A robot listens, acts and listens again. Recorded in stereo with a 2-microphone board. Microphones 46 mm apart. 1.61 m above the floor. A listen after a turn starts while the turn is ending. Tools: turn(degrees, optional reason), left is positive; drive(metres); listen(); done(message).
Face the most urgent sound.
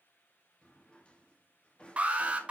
turn(degrees=-30, reason="The alarm: about 30° right or 150° right.")
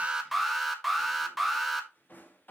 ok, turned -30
done("Found it: an alarm, straight ahead, 1 to 2 m away.")